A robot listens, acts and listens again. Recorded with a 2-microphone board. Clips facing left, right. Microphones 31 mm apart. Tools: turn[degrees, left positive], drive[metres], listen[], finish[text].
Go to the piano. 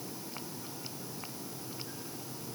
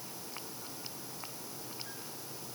Action: listen[]
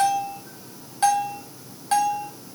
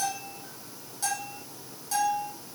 Action: listen[]
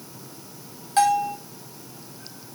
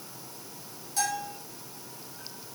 Action: finish[I can't make out a piano to turn to.]